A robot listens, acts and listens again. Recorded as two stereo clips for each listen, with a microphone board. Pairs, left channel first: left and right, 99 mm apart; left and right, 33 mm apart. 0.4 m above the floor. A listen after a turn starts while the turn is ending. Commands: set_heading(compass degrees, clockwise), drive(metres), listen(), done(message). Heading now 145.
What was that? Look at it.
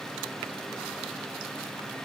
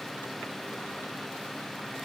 listen()
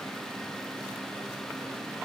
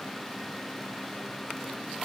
listen()
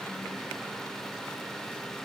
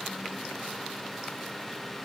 done("I can't make out anything.")